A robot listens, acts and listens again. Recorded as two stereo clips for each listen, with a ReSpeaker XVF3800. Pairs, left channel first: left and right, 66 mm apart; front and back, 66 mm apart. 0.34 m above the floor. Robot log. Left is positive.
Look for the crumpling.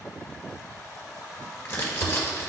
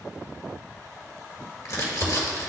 note: The crumpling: 35° left.
cmd yaw +35
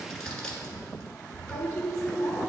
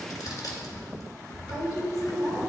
note: The crumpling is now 10° left.
cmd yaw +10
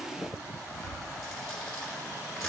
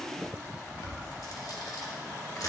end: Facing the crumpling.